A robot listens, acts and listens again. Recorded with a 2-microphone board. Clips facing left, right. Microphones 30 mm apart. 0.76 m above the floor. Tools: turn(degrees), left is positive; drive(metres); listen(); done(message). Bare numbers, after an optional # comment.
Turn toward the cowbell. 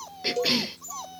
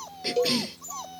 # The cowbell: about 25° right or 155° right.
turn(-25)
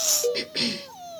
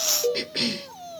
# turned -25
done("Facing the cowbell.")